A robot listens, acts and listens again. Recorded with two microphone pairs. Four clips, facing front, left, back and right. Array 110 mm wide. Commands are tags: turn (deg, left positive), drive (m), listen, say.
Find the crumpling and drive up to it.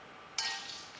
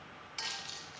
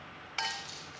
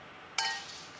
<turn deg="40"/>
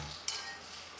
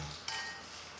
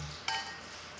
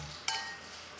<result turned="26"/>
<turn deg="10"/>
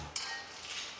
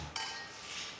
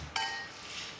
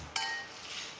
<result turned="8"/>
<drive m="1.0"/>
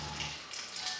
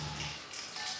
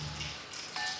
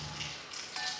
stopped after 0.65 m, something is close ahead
<say>Blocked. The crumpling is further on, straight ahead.</say>